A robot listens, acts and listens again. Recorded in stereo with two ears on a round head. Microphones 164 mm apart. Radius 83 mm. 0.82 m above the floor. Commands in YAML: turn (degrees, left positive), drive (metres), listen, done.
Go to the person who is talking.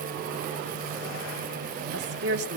turn: -65
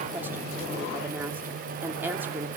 turn: -10
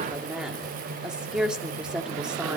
drive: 1.0
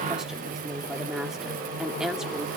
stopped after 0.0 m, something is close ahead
done: "Something is in my way. I am facing the woman speaking but have not reached it."